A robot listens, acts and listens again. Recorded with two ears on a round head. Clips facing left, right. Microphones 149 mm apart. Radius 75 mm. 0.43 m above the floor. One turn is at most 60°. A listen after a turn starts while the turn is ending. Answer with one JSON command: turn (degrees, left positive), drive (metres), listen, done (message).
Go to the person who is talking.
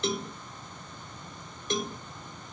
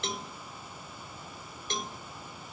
{"listen": true}
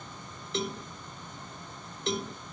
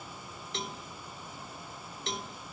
{"listen": true}
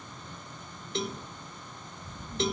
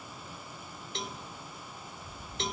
{"turn": 40}
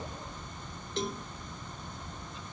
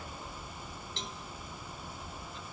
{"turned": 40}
{"drive": 1.0}
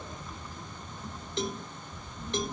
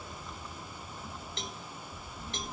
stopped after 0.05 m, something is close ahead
{"done": "Something is in my way. I am facing the child speaking but have not reached it."}